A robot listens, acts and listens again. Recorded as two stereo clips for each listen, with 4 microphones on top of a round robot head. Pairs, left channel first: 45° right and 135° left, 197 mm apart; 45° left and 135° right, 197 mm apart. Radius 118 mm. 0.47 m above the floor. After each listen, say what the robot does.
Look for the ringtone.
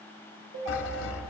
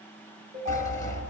Turn 175° left.
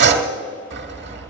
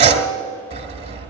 Keep listening.
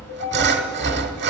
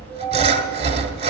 Turn 10° left.
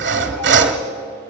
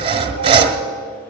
Keep listening.
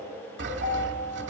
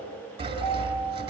Keep listening.
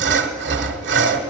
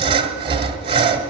Facing where the ringtone came from. I can't hear it now.